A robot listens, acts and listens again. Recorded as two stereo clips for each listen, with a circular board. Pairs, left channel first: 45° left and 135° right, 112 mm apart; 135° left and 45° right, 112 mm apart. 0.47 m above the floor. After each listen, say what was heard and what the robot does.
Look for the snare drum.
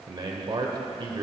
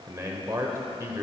Keep listening.
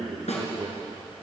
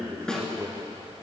The snare drum: 50° left. Turn 50° left.
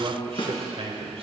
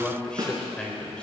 The snare drum is now 10° left. Turn 10° left.
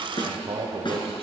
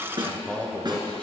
Found it: a snare drum, straight ahead, 1 to 2 m away.